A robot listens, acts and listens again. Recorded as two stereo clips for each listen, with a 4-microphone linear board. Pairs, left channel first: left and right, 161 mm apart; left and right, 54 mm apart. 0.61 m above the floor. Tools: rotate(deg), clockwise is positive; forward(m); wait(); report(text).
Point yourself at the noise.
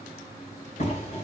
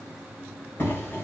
rotate(-45)
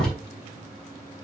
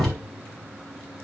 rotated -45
report("Found it: a door slam, straight ahead, 2 to 4 m away.")